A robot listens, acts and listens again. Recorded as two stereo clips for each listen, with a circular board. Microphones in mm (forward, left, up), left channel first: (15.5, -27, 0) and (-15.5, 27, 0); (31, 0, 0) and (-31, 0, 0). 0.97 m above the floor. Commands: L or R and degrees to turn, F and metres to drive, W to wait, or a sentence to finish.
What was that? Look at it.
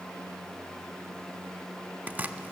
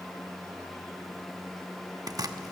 R175
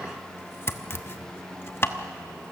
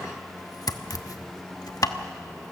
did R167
R10
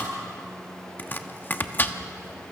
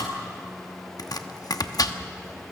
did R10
Found it: chopping, straight ahead.